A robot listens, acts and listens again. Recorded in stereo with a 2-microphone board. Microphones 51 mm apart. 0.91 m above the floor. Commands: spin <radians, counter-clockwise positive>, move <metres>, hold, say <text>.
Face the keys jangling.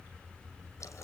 hold
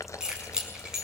spin -0.52
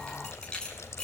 spin 0.35
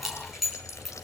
say Facing the keys jangling, over 4 m away.